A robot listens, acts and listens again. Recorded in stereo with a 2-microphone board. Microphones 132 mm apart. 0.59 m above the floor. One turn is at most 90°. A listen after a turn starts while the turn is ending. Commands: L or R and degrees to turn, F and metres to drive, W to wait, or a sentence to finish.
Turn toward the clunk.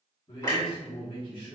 L25
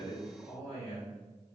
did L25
W
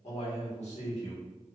I heard a clunk, but can't make it out now. It was about straight ahead or 130° left.